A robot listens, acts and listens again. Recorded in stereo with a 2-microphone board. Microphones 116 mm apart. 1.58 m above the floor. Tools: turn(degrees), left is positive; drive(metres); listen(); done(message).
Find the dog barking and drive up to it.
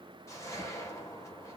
listen()
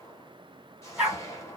turn(degrees=-30)
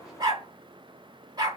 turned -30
turn(degrees=-140)
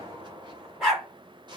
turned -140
drive(metres=1.0)
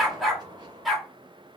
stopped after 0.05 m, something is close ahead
done("Something is in my way. I am facing the dog barking but have not reached it.")